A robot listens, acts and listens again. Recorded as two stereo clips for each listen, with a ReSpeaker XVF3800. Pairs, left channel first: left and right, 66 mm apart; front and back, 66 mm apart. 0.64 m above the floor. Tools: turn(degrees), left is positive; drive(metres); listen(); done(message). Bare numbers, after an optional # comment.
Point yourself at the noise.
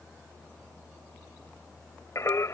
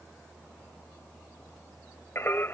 # The singing: 55° left.
turn(55)
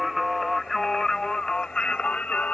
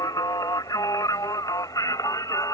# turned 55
# The singing is now 20° left.
turn(20)
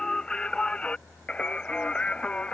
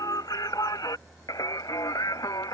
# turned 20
# The singing is now 15° left.
turn(15)
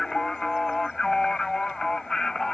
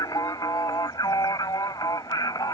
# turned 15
done("Found it: singing, straight ahead.")